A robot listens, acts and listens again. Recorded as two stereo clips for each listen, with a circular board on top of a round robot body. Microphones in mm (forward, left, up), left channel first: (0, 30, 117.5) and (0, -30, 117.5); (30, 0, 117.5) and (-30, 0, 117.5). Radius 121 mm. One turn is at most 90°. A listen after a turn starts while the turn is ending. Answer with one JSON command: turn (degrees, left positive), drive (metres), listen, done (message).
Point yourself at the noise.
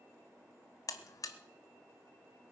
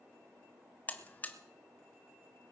{"turn": 65}
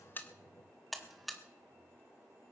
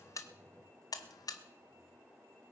{"done": "Found it: a buzzer, straight ahead."}